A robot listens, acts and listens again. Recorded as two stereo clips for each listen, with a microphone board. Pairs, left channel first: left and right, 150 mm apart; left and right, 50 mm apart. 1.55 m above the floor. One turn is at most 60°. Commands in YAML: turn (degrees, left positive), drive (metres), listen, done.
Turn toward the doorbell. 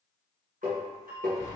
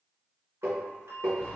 turn: -60
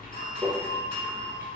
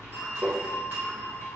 turn: -45
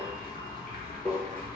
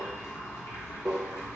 listen: true
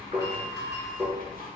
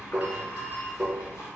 turn: -25
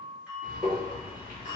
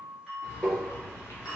turn: -10
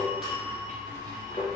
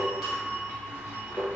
done: "Facing the doorbell."